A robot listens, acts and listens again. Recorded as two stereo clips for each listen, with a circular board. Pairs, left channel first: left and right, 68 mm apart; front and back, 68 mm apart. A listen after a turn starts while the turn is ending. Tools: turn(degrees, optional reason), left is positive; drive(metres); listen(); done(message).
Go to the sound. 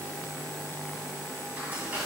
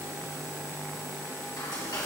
turn(degrees=-25, reason="The frying: 25° right.")
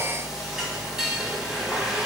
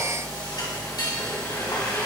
turn(degrees=-10, reason="The frying is now 10° right.")
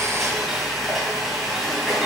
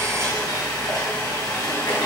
drive(metres=1.0)
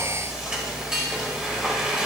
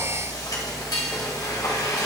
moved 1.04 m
turn(degrees=-15, reason="The frying is now 15° right.")
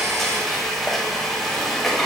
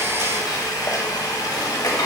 drive(metres=1.0)
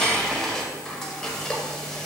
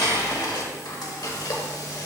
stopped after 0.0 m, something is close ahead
turn(degrees=10, reason="The frying is now 10° left.")
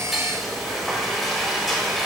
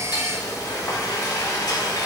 done("Arrived at the frying, straight ahead.")